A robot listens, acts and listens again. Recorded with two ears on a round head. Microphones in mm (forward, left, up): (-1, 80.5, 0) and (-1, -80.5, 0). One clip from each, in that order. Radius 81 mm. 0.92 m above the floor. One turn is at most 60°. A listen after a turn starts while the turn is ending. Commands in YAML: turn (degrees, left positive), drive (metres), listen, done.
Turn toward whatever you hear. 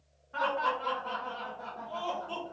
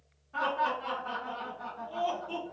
turn: 30
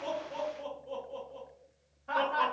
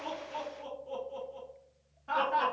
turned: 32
turn: -15
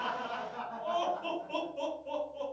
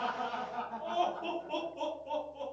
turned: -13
done: "Found it: laughter, straight ahead."